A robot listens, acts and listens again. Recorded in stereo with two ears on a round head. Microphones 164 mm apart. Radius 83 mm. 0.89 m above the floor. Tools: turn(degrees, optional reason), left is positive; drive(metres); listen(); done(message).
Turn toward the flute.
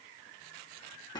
listen()
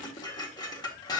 listen()
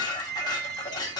turn(degrees=30)
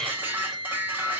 turn(degrees=145, reason="So it is at 145° left.")
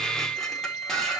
turn(degrees=-25, reason="The flute is now 25° right.")
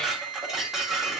turn(degrees=-20, reason="The flute is now 20° right.")
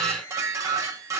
listen()
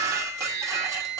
done("Facing the flute.")